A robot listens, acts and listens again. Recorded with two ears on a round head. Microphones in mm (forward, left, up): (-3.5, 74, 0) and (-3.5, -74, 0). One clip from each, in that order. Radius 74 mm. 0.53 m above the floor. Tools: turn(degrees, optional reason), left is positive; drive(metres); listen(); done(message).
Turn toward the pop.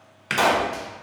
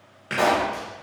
turn(degrees=55, reason="The pop: about 55° left or 125° left.")
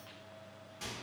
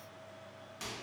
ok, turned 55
listen()
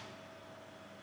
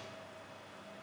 done("I heard a pop, but can't make it out now. It was about straight ahead or 70° left.")